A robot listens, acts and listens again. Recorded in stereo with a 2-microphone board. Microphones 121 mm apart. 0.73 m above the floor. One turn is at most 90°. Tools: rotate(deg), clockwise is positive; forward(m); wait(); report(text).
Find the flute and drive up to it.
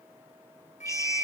rotate(-75)
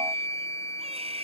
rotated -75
rotate(-25)
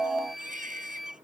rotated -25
forward(1.0)
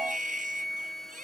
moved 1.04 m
forward(1.0)
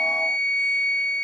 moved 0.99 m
rotate(-10)
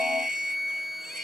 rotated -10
forward(1.0)
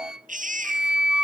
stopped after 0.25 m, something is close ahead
report("I am next to the flute.")